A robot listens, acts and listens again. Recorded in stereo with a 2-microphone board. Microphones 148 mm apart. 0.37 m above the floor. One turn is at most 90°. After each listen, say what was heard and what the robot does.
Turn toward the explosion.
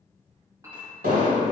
Turn 90° right.
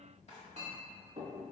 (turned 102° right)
Nothing new. It was at 10° left. Turn 10° left.
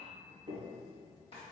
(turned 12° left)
Facing where the explosion came from. I can't hear it now.